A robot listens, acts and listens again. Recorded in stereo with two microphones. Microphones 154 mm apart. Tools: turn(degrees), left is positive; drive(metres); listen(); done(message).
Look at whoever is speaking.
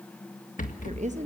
turn(degrees=-50)
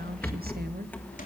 listen()
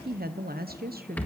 turn(degrees=-80)
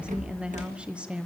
done("Facing the woman speaking.")